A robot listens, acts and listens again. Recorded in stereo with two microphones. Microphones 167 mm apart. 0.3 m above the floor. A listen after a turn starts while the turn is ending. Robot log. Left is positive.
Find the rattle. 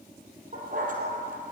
cmd idle
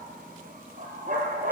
cmd idle
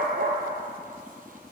end: I can't make out a rattle to turn to.